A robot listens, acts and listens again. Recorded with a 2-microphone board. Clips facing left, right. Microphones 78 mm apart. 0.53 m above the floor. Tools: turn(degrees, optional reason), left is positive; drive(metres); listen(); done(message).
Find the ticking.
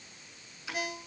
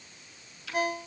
turn(degrees=20, reason="The ticking: about 20° left or 160° left.")
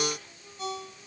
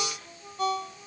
listen()
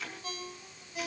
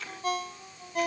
done("Found it: ticking, straight ahead, over 4 m away.")